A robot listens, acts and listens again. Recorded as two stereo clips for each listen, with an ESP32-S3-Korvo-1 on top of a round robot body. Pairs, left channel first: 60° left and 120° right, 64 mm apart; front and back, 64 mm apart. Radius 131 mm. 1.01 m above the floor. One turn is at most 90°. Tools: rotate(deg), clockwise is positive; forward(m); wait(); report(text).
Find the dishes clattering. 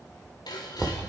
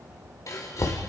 rotate(-45)
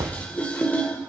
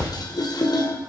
rotate(10)
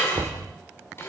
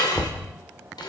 report("Facing the dishes clattering.")